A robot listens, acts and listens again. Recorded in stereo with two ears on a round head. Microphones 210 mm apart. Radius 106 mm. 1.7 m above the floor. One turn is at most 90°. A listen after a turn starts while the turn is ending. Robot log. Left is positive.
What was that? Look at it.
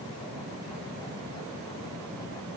cmd idle
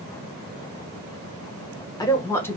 cmd yaw +30
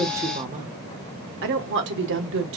note: So it is at 60° right.
cmd yaw -60
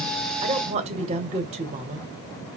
note: The woman speaking is now 25° right.
cmd yaw -25
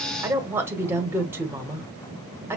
note: The woman speaking is now 10° right.
cmd yaw -10
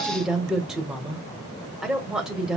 end: Facing the woman speaking.